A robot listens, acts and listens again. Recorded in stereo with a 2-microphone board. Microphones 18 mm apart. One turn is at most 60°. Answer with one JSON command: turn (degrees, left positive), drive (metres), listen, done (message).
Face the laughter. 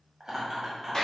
{"turn": -25}
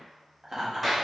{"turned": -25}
{"turn": -30}
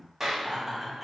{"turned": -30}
{"turn": -30}
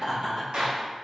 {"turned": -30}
{"turn": -60}
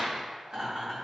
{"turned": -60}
{"turn": -60}
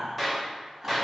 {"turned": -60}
{"turn": -15}
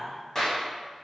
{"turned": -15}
{"done": "Found it: laughter, straight ahead, 2 to 4 m away."}